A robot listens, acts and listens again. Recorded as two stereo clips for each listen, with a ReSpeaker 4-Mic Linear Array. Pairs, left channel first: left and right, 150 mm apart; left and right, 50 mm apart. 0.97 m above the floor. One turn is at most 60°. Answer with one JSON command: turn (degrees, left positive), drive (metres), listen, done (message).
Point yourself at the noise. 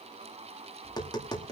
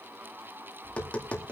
{"turn": 25}
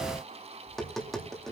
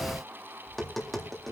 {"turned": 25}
{"done": "Found it: tapping, straight ahead, 2 to 4 m away."}